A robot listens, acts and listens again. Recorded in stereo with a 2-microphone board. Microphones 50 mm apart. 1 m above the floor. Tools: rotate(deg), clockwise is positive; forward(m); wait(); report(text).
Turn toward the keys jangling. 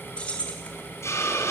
rotate(-20)
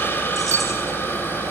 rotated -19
wait()
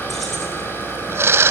wait()
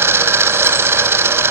report("I heard keys jangling, but can't make it out now. It was about straight ahead or 140° left.")